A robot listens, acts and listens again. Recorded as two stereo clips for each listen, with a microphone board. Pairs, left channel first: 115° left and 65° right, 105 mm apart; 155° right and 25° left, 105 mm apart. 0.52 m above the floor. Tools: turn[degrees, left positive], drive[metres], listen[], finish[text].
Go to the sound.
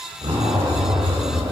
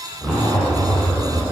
Thought: The zipper: 70° right.
Action: turn[-70]
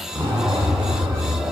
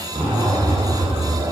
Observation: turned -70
Action: drive[1.0]
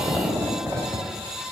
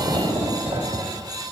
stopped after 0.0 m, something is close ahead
Action: finish[Something is in my way. I am facing the zipper but have not reached it.]